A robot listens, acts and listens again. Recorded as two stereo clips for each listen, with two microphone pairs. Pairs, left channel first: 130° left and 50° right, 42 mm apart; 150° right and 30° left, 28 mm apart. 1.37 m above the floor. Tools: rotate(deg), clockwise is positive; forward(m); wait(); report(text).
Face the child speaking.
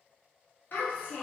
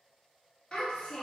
rotate(-150)
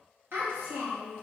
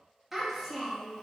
rotate(60)
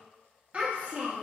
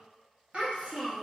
rotate(10)
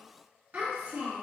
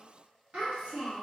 rotate(15)
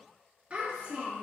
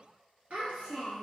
report("Found it: a child speaking, straight ahead, 1 to 2 m away.")